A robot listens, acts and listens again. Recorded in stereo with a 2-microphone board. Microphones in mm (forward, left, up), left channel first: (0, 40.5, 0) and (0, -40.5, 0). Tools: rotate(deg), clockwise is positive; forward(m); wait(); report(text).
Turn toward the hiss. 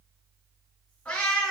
wait()
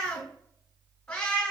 wait()
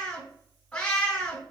report("I can't make out a hiss to turn to.")